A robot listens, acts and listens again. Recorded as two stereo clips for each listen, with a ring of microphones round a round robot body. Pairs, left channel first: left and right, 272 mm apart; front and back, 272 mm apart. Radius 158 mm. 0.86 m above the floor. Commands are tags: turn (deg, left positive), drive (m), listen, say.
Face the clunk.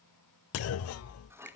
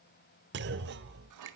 <turn deg="125"/>
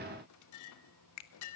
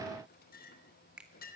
<say>I heard a clunk from this way, but can't make it out now.</say>